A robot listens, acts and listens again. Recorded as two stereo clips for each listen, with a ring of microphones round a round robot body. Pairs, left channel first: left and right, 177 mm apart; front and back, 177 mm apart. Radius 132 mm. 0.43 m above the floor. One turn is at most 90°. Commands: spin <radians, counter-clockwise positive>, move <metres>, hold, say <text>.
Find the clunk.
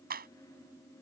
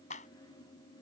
hold
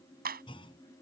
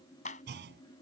spin 1.57
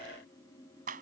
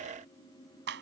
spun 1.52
spin 1.31
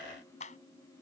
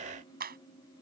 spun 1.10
spin 0.17
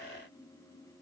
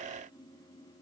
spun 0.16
say Facing where the clunk came from. I can't hear it now.